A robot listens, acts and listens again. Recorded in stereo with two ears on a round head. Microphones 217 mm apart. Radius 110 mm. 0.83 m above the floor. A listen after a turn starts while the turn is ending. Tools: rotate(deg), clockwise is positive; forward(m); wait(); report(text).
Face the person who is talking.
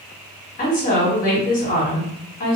rotate(-35)
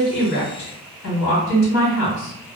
rotate(-110)
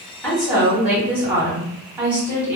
report("Facing the woman speaking, 1 to 2 m away.")